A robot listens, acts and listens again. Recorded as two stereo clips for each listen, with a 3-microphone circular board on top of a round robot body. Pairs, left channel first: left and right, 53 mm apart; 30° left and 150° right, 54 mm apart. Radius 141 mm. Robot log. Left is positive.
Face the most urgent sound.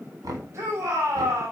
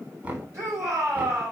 note: The shout: 125° right.
cmd yaw -125
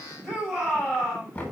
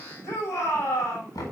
end: Found it: a shout, straight ahead, over 4 m away.